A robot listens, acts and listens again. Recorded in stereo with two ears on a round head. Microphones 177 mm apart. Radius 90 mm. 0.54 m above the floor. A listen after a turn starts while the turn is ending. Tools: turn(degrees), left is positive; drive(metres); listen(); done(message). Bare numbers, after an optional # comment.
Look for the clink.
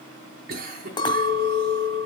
# The clink: about 20° left or 160° left.
turn(20)
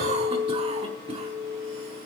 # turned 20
done("Found it: a clink, straight ahead, 1 to 2 m away.")